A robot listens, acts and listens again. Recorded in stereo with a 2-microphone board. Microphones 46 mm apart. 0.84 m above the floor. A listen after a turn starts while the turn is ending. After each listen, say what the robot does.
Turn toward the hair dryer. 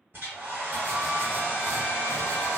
Turn 55° right.
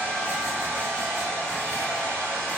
Turn 70° right.
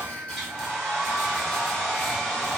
Turn 10° left.
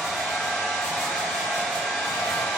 Found it: a hair dryer, straight ahead, 1 to 2 m away.